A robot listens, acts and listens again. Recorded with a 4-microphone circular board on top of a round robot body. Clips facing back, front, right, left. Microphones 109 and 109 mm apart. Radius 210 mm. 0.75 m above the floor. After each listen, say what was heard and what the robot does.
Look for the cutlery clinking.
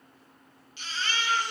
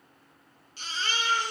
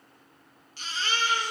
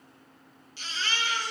Keep listening.
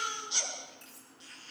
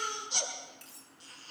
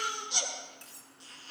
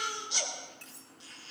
The cutlery clinking: 20° right. Turn 20° right.
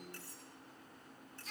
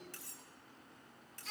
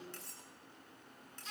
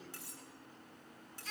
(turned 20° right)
Facing the cutlery clinking.